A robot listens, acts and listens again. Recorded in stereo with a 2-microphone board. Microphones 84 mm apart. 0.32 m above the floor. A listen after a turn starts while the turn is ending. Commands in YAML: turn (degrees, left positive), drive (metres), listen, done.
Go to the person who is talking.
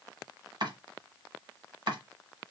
listen: true
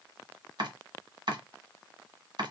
listen: true
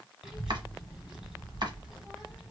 turn: -30
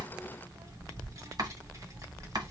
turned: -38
turn: -130
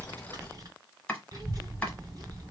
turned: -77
turn: -55
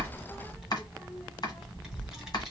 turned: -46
drive: 1.0
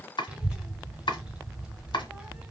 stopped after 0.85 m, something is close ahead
turn: -15
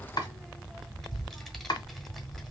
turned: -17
done: "Arrived at the child speaking, straight ahead."